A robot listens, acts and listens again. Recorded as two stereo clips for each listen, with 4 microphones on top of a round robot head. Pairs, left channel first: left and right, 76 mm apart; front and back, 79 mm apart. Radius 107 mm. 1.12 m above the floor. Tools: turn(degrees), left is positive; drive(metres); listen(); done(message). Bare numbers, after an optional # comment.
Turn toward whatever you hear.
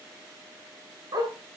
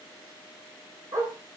# The dog barking: 120° right.
turn(-120)
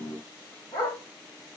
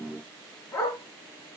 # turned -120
# The dog barking is now 55° left.
turn(55)
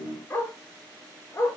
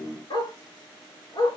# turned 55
# The dog barking is now 20° left.
turn(20)
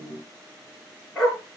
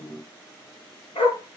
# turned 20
done("Facing the dog barking.")